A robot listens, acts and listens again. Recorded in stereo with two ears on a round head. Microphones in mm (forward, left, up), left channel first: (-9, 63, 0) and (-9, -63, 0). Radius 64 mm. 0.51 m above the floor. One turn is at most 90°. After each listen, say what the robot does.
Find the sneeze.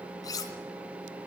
Keep listening.
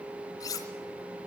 Keep listening.
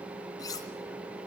I can't make out a sneeze to turn to.